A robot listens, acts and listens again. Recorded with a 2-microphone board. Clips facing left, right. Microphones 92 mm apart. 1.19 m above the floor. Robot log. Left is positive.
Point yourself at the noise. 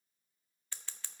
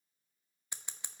note: The scissors: about 20° right or 160° right.
cmd yaw -20
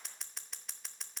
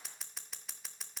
end: Facing the scissors.